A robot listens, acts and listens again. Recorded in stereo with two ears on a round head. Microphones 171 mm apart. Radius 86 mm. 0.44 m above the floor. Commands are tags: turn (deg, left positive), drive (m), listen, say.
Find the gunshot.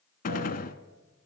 <turn deg="45"/>
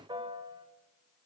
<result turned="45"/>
<listen/>
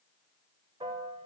<say>I heard a gunshot, but can't make it out now. It was about straight ahead or 90° left.</say>